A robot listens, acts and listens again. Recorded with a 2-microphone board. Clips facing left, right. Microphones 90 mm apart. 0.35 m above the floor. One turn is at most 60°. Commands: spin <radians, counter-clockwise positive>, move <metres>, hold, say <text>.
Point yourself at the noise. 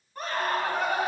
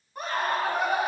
spin -0.52
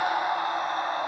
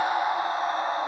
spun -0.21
spin -1.05
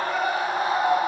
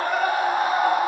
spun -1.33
spin -1.05
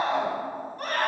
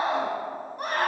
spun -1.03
spin -0.35
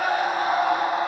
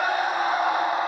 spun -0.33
say Facing the scream, 2 to 4 m away.